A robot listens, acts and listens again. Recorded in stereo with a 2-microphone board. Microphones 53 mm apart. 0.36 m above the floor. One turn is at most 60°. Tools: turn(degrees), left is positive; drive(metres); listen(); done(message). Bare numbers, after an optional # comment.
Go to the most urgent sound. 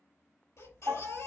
# The baby crying: about 65° left or 115° left.
turn(60)
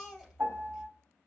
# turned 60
drive(1.0)
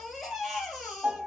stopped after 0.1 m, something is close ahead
done("Something is in my way. I am facing the baby crying but have not reached it.")